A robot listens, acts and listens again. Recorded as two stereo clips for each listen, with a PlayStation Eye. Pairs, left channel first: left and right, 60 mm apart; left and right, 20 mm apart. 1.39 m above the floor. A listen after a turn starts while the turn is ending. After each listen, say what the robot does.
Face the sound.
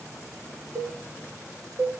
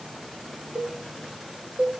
Turn 60° right.
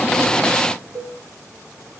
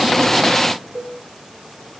Turn 60° right.
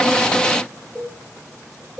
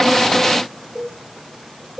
Found it: a cowbell, straight ahead, 2 to 4 m away.